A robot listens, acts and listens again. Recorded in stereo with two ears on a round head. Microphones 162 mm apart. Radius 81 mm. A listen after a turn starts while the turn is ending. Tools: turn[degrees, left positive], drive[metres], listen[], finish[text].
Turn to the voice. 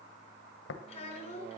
Thought: The child speaking: about 35° left or 145° left.
Action: turn[35]
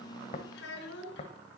Thought: So it is at 110° left.
Action: turn[110]
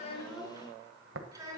Thought: The child speaking is now 20° right.
Action: turn[-20]
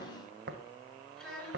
Action: finish[Facing the child speaking, over 4 m away.]